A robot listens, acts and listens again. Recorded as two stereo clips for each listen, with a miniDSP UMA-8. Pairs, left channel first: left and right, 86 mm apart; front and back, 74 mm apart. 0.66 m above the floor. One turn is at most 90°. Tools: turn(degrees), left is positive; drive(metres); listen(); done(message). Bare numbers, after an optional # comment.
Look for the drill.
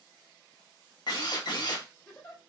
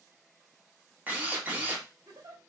# The drill: 115° left.
turn(90)
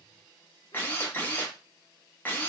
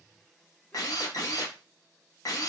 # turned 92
# The drill is now 25° left.
turn(25)
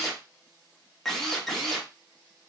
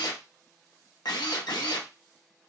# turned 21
done("Facing the drill.")